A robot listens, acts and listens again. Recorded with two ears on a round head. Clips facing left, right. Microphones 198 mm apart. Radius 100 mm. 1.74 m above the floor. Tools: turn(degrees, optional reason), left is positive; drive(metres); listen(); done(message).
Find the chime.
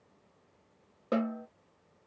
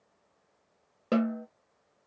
listen()
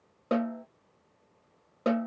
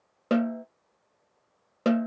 listen()
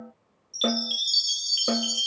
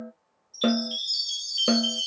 turn(degrees=40, reason="The chime: about 40° left or 140° left.")
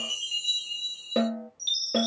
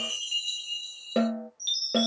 done("Facing the chime.")